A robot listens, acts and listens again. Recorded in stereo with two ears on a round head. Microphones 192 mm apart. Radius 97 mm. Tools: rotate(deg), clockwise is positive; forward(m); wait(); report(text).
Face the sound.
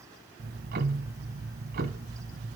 rotate(45)
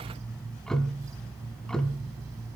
report("Found it: ticking, straight ahead.")